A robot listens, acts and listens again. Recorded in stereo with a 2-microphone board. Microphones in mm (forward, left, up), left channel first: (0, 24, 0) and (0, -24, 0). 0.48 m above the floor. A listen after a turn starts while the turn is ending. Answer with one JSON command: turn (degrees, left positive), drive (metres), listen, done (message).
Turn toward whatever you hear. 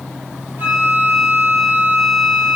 {"turn": -55}
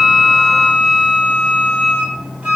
{"turn": -25}
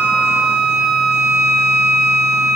{"done": "Found it: a flute, straight ahead, 1 to 2 m away."}